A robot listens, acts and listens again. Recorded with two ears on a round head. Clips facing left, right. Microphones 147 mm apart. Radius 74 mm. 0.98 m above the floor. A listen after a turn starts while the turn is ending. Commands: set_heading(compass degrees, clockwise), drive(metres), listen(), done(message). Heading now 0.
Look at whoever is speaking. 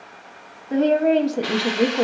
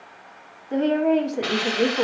set_heading(315)
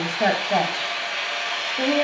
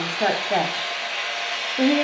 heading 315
done("Facing the woman speaking.")